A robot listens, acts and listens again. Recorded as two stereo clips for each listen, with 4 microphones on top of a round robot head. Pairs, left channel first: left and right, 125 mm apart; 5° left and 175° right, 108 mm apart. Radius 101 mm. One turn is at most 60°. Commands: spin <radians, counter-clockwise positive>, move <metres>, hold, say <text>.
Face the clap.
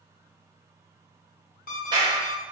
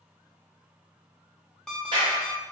spin -1.05
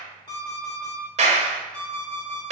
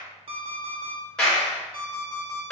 spin -1.05
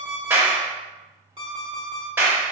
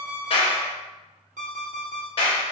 spin -0.35
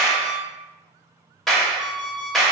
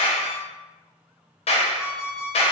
say Facing the clap.